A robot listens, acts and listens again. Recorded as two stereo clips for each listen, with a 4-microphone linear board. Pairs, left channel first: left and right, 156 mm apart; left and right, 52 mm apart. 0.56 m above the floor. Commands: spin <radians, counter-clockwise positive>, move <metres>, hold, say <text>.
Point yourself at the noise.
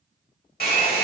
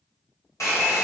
spin 1.57
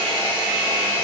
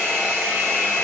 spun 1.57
spin 0.17
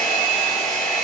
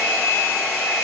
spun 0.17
say Found it: a hair dryer, straight ahead, 1 to 2 m away.